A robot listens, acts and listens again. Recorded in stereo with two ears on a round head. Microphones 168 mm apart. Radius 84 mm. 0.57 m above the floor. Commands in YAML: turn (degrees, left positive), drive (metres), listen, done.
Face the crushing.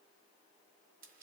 listen: true
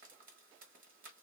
listen: true
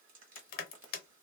turn: 50
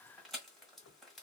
listen: true
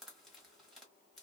listen: true
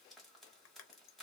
done: "I heard crushing, but can't make it out now. It was about straight ahead or 80° left."